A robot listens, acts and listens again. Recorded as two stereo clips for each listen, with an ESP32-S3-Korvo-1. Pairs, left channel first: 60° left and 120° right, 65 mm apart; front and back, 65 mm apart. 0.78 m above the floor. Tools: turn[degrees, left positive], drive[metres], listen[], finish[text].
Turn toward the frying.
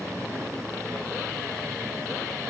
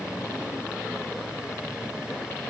Action: listen[]
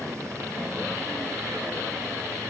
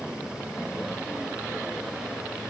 Action: listen[]
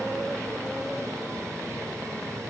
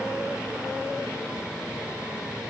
Action: finish[I can't make out frying.]